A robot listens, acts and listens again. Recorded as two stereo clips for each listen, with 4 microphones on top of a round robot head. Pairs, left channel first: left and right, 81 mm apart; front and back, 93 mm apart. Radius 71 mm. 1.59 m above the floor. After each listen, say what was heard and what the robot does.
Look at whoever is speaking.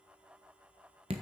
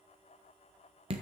Keep listening.
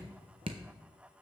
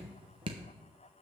Keep listening.
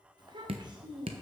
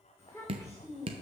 The child speaking: 65° right. Turn 65° right.
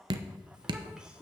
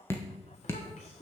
The child speaking is now 10° right. Turn 10° right.
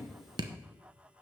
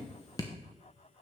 Keep listening.
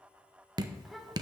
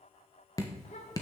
Found it: a child speaking, straight ahead, 2 to 4 m away.